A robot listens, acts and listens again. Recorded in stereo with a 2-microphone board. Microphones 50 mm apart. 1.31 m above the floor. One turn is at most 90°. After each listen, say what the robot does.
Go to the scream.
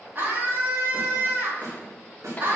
Turn 45° right.
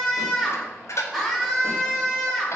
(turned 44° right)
Drive 1.0 m forward.
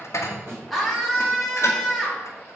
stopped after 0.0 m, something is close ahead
Blocked. The scream is further on, straight ahead.